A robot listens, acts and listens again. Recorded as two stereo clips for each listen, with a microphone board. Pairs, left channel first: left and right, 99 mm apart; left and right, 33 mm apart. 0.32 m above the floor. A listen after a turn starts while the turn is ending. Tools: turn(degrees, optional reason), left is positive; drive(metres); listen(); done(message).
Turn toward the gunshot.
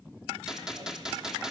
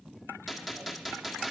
turn(degrees=-30)
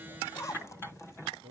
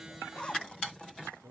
listen()
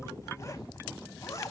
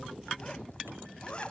done("I heard a gunshot, but can't make it out now. It was about 25° left or 145° right.")